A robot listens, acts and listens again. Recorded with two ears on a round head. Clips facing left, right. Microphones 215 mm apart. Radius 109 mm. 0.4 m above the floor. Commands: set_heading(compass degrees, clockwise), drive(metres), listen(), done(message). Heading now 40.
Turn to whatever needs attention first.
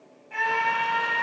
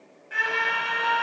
set_heading(60)
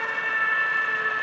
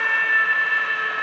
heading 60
set_heading(195)
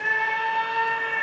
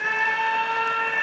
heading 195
set_heading(210)
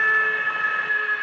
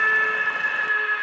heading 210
done("Facing the scream.")